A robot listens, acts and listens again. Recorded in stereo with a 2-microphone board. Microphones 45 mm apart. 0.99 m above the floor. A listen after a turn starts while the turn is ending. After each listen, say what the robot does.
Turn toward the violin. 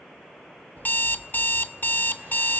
Keep listening.
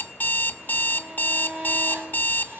Turn 20° right.
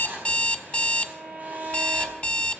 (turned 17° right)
Turn 140° right.
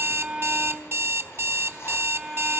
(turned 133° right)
Found it: a violin, straight ahead.